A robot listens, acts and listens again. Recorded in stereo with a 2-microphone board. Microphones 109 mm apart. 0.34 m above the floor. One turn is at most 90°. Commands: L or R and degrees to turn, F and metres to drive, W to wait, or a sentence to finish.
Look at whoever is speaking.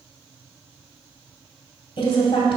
L50
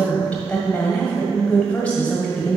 L15
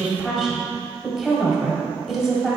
Found it: a woman speaking, straight ahead, 1 to 2 m away.